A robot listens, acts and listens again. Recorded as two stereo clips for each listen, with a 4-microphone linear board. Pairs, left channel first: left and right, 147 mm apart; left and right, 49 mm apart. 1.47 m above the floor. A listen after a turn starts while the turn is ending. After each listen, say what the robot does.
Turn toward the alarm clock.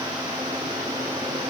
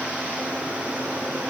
Keep listening.
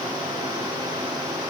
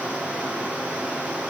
Keep listening.
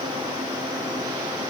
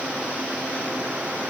I can't make out an alarm clock.